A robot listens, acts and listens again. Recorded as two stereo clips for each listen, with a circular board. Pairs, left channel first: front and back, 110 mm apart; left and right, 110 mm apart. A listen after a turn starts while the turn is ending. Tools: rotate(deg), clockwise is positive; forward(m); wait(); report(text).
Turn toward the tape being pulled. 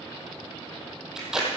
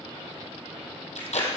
rotate(-95)
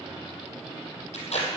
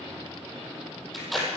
report("Found it: tape being pulled, straight ahead.")